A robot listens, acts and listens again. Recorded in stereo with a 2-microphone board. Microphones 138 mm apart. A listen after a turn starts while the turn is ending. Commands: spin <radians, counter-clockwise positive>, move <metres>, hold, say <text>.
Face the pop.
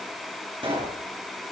spin -0.70
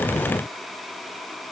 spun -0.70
hold
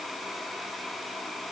say I heard a pop, but can't make it out now. It was about straight ahead or 100° right.